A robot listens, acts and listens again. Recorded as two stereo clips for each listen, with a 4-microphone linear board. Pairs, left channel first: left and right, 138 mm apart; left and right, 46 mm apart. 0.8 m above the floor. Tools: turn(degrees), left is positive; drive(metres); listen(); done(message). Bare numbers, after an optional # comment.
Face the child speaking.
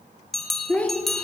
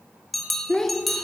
turn(30)
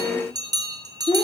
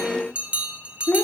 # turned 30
# So it is at 140° left.
turn(140)
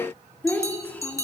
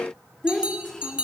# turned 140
# The child speaking is now 10° left.
turn(10)
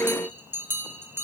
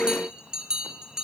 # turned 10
listen()
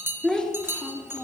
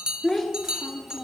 done("Found it: a child speaking, straight ahead.")